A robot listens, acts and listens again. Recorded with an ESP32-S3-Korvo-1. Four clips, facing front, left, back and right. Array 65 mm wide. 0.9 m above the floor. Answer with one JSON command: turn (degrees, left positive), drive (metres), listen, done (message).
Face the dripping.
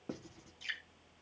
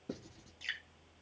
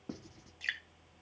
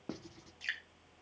{"turn": -165}
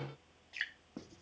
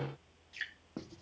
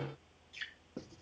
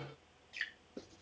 {"done": "Found it: dripping, straight ahead, 2 to 4 m away."}